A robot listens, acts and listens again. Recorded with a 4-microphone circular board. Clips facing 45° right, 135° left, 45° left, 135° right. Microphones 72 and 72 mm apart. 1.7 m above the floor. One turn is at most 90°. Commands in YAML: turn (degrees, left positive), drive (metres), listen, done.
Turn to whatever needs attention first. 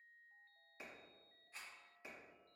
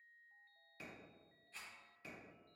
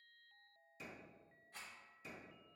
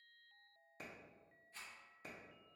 listen: true
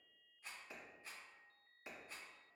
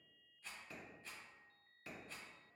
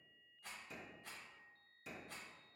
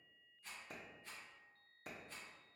listen: true
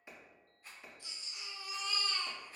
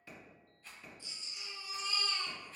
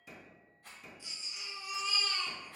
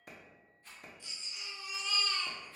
turn: -40
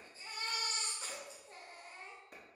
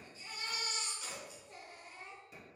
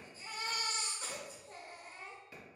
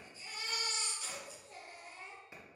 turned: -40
done: "Facing the baby crying, under 1 m away."